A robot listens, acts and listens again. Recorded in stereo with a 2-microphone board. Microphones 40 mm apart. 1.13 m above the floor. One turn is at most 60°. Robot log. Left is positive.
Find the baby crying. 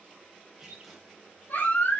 note: The baby crying: about 55° left or 125° left.
cmd yaw +55
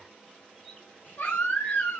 note: So it is at 70° left.
cmd yaw +60
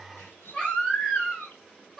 note: The baby crying is now 15° left.
cmd yaw +15
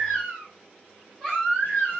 end: Facing the baby crying, over 4 m away.